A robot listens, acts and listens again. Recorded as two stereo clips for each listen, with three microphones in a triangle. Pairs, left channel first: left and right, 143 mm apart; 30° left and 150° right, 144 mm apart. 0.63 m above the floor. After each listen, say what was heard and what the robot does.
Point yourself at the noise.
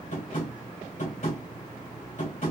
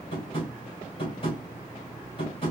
The tapping: 75° left. Turn 75° left.
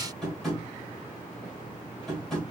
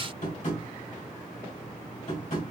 Found it: tapping, straight ahead, 1 to 2 m away.